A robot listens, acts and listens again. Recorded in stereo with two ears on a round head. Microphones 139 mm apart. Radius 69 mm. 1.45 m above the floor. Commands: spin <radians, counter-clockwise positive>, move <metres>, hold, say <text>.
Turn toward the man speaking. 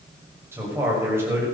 spin -0.26
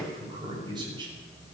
spin -2.62
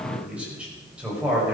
spin -0.17
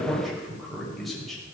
say Facing the man speaking, over 4 m away.